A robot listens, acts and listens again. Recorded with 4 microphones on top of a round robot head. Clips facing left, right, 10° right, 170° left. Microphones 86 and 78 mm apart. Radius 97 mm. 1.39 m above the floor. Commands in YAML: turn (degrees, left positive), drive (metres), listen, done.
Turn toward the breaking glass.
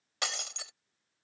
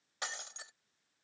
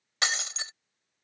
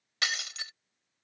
turn: 50
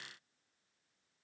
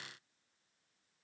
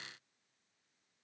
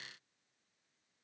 done: "Facing where the breaking glass came from. I can't hear it now."